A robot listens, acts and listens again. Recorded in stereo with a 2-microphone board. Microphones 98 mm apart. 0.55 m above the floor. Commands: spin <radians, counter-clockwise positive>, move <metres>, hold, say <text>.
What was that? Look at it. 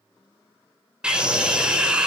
spin -0.52
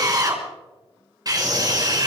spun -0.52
spin -2.44
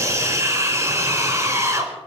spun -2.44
spin -0.52
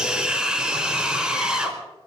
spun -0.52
say Facing the scream.